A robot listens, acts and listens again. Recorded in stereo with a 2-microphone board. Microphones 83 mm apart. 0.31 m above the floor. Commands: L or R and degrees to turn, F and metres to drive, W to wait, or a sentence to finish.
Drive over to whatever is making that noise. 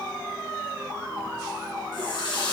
L65
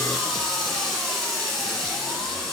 F1.0
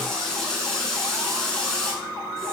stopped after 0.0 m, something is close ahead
Blocked. The running tap is further on, straight ahead.